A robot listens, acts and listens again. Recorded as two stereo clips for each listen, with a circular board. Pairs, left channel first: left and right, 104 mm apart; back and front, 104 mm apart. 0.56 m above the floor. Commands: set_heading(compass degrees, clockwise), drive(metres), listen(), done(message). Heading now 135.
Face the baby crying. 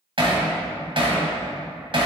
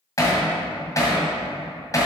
listen()
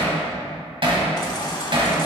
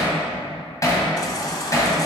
set_heading(0)
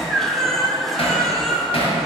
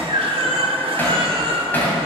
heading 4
done("Facing the baby crying.")